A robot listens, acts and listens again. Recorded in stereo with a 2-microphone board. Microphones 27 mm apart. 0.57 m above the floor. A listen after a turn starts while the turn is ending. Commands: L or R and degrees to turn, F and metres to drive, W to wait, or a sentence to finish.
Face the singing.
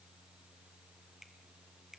W
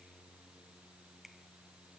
W
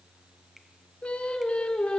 L45
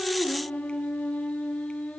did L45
L100
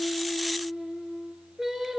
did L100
R20
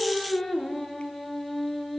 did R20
Facing the singing.